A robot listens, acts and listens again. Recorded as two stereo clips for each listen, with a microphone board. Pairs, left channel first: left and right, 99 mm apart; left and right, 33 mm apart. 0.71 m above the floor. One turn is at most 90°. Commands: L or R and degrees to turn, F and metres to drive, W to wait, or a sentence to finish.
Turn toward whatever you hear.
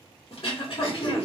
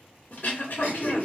L60
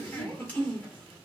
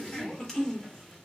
L20
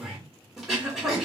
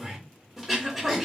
Found it: throat clearing, straight ahead.